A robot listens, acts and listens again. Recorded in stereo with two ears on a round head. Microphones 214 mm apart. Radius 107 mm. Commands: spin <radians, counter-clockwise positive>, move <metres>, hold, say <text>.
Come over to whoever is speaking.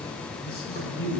spin 0.79
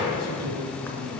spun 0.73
spin 1.66
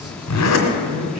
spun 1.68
move 1.0
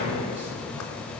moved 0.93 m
hold
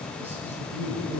spin -0.17
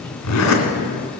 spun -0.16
hold
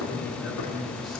move 1.0
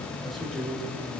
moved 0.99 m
move 1.0
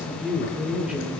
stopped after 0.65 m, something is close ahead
say Arrived at the man speaking, straight ahead.